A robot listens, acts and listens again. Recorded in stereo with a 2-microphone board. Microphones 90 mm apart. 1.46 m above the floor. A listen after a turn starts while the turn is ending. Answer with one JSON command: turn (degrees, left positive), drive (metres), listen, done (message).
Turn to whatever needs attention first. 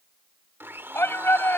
{"turn": 25}
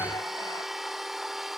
{"listen": true}
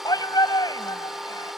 {"turn": 135}
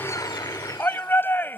{"turn": 25}
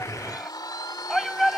{"done": "Found it: a shout, straight ahead."}